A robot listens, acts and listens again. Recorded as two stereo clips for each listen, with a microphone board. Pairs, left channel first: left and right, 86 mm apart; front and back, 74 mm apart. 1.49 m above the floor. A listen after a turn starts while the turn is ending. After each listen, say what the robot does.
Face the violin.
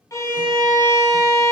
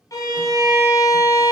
Turn 40° left.
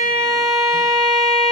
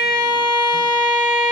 Facing the violin.